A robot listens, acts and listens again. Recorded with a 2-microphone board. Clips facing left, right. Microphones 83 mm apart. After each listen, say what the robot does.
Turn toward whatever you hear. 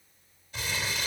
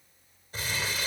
Turn 40° right.
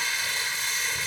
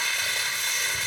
Turn 100° right.
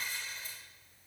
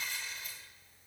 Turn 35° left.
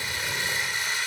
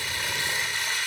Turn 20° left.
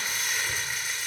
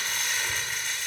Facing the crumpling.